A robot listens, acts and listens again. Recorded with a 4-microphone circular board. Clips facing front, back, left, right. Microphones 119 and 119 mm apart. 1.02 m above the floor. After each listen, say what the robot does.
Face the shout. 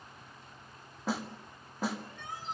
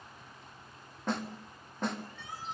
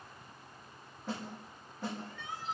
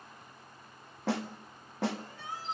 Turn 40° right.
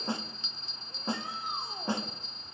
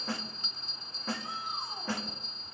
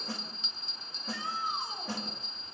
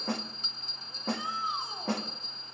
Keep listening.
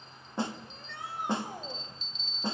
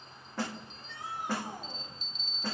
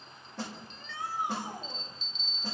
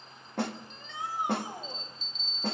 Turn 20° right.
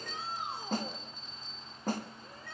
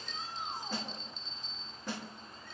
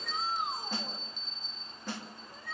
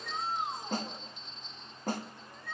Facing the shout.